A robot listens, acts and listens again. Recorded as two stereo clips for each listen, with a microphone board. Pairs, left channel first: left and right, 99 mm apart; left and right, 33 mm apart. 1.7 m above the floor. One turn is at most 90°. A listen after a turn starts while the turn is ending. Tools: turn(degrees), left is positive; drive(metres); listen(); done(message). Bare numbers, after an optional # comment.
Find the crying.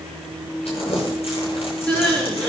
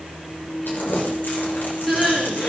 turn(30)
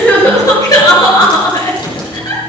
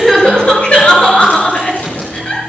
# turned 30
# So it is at 140° left.
turn(90)
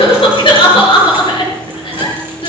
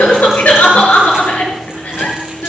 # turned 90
# The crying is now 60° left.
turn(60)
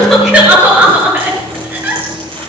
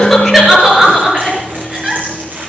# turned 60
# The crying is now 20° right.
turn(-20)
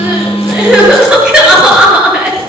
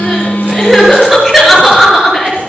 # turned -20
# The crying is now 10° right.
turn(-10)
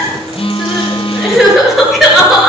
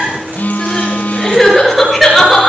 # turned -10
done("Facing the crying.")